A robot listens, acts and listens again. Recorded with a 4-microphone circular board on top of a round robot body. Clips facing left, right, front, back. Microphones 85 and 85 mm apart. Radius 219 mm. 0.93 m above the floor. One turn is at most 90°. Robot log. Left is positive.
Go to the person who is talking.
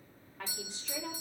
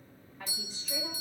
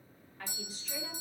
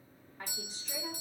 note: The woman speaking: 115° left.
cmd yaw +90
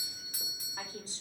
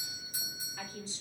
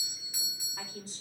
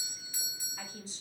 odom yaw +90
note: The woman speaking is now 45° left.
cmd yaw +45
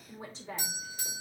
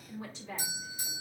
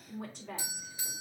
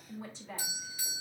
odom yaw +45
note: The woman speaking is now 35° left.
cmd yaw +35
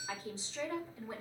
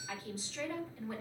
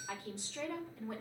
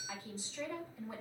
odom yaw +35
note: The woman speaking is now 25° left.
cmd yaw +25
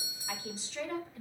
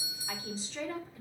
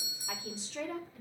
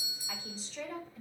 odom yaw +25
cmd fwd 1.0
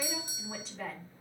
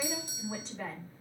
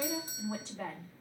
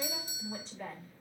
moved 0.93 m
cmd fwd 1.0
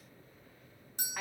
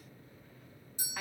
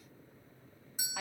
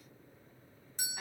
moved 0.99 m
note: The woman speaking is now 10° left.
cmd yaw +10
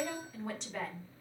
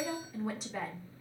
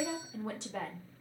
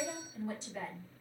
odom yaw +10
cmd fwd 1.0
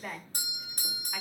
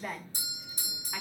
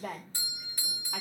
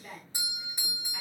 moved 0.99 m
cmd fwd 1.0
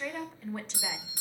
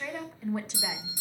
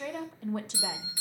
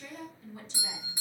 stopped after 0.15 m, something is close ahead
end: I am next to the woman speaking.